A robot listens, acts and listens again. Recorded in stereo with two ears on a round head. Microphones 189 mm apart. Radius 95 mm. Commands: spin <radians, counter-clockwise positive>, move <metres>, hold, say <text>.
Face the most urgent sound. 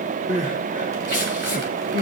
spin -0.61
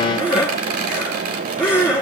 say Found it: crying, straight ahead, over 4 m away.